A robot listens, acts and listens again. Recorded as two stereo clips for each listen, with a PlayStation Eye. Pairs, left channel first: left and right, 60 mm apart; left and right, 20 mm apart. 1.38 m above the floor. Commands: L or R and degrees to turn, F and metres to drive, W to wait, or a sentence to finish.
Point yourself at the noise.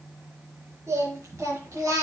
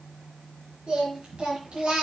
R60
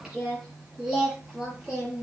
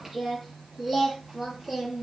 R10
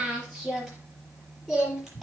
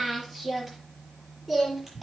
Found it: singing, straight ahead, over 4 m away.